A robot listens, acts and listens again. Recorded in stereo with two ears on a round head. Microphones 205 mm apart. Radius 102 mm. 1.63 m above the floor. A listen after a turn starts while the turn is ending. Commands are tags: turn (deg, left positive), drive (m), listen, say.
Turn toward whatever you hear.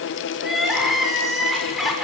<turn deg="30"/>
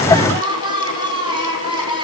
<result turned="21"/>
<turn deg="-20"/>
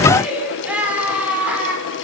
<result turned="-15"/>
<say>Facing the crying.</say>